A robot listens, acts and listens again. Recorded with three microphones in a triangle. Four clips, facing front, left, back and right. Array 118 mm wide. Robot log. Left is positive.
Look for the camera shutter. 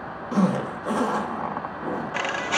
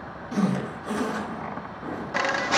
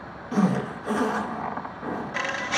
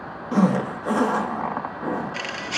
note: The camera shutter: 50° left.
cmd yaw +50
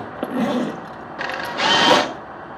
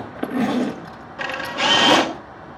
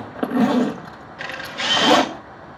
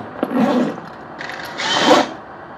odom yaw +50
note: The camera shutter is now 15° left.
cmd yaw +15
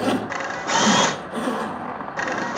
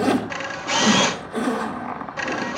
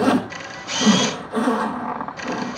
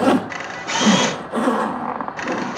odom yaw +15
end: Facing the camera shutter.